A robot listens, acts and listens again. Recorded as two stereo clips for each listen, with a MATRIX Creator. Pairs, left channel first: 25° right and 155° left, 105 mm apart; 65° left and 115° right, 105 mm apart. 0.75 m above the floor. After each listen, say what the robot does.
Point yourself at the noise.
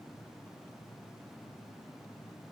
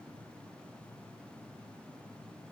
Keep listening.
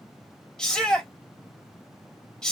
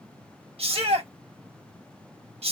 Turn 105° right.
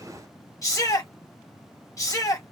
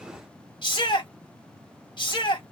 Turn 30° left.
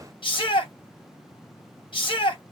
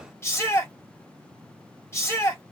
Found it: a shout, straight ahead, 1 to 2 m away.